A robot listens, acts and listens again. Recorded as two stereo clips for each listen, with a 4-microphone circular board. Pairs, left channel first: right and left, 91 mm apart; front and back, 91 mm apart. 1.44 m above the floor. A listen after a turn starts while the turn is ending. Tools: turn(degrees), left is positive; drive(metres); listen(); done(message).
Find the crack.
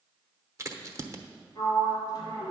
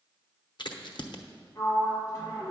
turn(degrees=35)
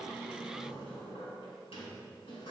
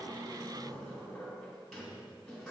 done("I heard a crack from this way, but can't make it out now.")